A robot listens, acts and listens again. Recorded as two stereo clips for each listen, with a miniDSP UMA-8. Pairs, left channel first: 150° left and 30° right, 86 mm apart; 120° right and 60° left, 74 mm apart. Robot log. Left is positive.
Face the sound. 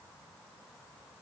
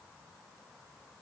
cmd idle
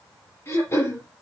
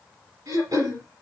note: The throat clearing: 90° left.
cmd yaw +90
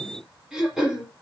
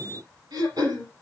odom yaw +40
note: The throat clearing is now 50° left.
cmd yaw +50
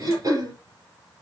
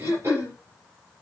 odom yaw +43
note: The throat clearing is now 10° left.
cmd yaw +10
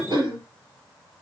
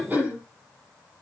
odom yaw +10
end: Found it: throat clearing, straight ahead.